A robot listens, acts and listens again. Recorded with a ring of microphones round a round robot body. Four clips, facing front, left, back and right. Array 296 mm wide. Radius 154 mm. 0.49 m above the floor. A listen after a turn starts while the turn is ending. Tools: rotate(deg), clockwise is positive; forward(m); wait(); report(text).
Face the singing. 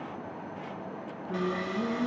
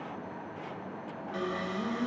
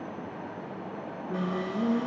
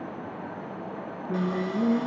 rotate(90)
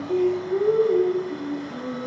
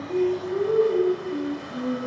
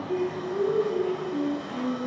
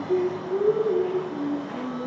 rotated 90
rotate(25)
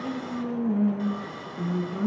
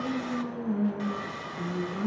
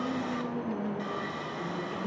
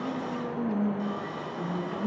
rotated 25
report("Found it: singing, straight ahead, 2 to 4 m away.")